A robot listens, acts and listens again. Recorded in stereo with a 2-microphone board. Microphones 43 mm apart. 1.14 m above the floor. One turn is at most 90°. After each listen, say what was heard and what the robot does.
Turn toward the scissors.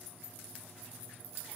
Keep listening.
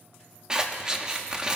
The scissors: about 20° right or 160° right. Turn 20° right.
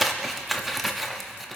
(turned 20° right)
Found it: scissors, straight ahead, under 1 m away.